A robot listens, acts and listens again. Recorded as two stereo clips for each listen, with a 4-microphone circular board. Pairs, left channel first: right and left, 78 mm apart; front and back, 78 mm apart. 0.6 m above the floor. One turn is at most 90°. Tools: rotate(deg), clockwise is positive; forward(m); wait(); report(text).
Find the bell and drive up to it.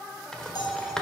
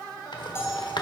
rotate(60)
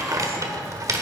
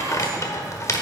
wait()
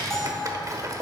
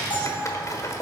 forward(1.0)
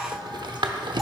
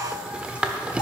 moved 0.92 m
wait()
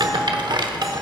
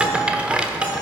wait()
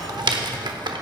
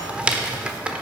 report("I heard a bell from this way, but can't make it out now. I did not reach it.")